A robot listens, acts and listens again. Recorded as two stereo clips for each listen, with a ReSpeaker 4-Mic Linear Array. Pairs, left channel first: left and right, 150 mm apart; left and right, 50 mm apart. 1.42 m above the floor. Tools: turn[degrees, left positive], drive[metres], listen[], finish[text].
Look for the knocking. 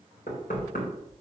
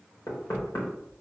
Action: turn[90]
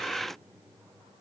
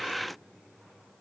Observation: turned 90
Action: listen[]
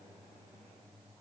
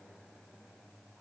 Action: listen[]
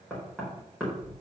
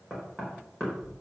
Action: finish[Facing the knocking, over 4 m away.]